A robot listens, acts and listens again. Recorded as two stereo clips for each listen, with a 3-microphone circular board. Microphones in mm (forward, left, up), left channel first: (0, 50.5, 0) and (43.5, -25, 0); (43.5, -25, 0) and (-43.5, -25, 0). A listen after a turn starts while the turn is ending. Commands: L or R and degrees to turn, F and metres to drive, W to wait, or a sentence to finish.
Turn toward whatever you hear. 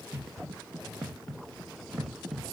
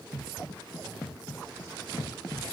W
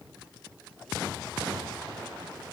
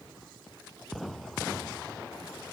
W
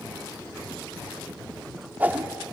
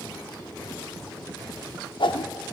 L10
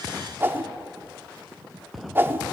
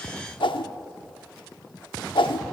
Facing the whoosh.